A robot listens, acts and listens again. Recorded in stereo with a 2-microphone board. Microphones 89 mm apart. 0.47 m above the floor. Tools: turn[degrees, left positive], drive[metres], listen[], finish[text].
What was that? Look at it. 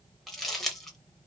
Action: turn[30]
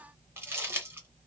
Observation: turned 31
Thought: So it is at 25° right.
Action: turn[-25]
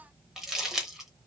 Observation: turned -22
Action: finish[Facing the crumpling.]